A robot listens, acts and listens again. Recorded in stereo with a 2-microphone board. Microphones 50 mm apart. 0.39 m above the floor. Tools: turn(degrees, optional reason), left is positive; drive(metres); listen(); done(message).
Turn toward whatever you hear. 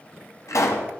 turn(degrees=70, reason="The pop: about 70° left or 110° left.")
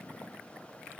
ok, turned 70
listen()
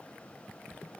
done("I heard a pop, but can't make it out now. It was about straight ahead or 40° left.")